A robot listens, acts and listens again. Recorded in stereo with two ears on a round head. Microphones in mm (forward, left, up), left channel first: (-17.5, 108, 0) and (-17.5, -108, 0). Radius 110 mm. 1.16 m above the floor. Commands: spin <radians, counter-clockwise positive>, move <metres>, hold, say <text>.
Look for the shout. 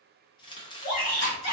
spin 1.13
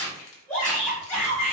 spin 0.17
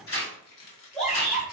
say Facing the shout.